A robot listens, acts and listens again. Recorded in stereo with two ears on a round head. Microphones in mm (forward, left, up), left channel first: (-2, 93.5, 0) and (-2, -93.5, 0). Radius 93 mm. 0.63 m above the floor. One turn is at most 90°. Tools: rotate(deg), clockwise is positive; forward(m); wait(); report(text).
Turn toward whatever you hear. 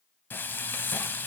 rotate(-30)
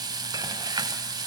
rotate(20)
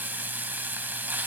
rotate(10)
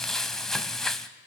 report("Found it: frying, straight ahead.")